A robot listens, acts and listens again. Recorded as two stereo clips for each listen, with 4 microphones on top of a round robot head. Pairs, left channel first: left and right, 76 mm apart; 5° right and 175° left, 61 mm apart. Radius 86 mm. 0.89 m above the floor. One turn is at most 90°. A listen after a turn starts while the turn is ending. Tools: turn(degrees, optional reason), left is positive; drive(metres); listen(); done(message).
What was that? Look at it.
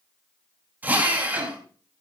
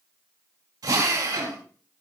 turn(degrees=-90, reason="The drill: 160° right.")
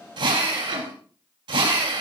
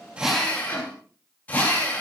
turn(degrees=-75, reason="The drill is now 75° right.")
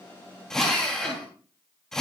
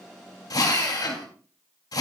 done("Found it: a drill, straight ahead, 2 to 4 m away.")